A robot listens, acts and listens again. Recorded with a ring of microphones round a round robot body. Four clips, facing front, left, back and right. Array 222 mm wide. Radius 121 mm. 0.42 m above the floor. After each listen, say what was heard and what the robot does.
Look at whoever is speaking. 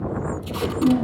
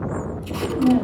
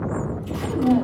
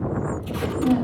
The woman speaking: 150° left. Turn 150° left.
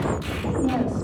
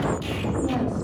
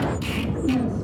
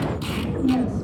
Found it: a woman speaking, straight ahead, 2 to 4 m away.